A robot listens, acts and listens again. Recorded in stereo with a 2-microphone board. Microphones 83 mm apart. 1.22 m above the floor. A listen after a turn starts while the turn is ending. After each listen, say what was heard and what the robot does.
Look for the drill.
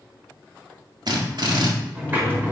The drill: about 60° right or 120° right. Turn 60° right.
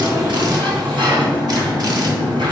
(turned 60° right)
Keep listening.
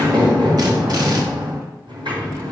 Keep listening.
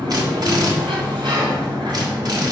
So it is at 55° right. Turn 55° right.
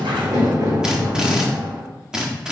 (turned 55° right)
The drill is now 10° right. Turn 10° right.
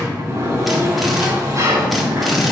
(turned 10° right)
Found it: a drill, straight ahead, 1 to 2 m away.